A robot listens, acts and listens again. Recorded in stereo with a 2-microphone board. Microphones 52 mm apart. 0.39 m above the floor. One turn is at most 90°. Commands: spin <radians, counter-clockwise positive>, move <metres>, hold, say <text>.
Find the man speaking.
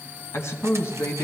spin 1.05
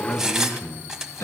spin 0.96
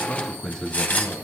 spin 0.26
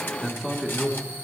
say Found it: a man speaking, straight ahead.